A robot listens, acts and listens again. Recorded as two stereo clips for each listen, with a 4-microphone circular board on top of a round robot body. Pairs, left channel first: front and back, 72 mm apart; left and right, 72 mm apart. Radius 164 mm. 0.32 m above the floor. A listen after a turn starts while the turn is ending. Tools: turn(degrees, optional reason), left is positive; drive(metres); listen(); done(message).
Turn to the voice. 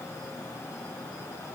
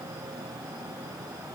listen()
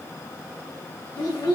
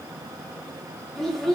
done("Found it: a child speaking, straight ahead.")